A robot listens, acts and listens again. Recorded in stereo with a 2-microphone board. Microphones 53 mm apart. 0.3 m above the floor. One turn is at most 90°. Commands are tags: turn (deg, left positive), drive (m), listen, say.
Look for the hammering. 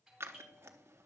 <listen/>
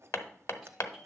<turn deg="60"/>
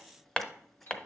<turn deg="20"/>
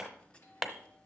<say>Facing the hammering, 1 to 2 m away.</say>